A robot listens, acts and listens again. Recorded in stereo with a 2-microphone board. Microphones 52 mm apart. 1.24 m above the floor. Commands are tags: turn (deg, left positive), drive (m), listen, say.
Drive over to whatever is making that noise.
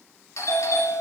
<turn deg="90"/>
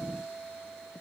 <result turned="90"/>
<drive m="1.0"/>
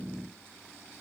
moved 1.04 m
<listen/>
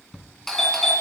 <drive m="1.0"/>
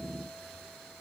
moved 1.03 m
<listen/>
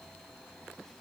<listen/>
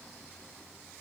<say>Facing where the doorbell came from. I can't hear it now. I did not reach it.</say>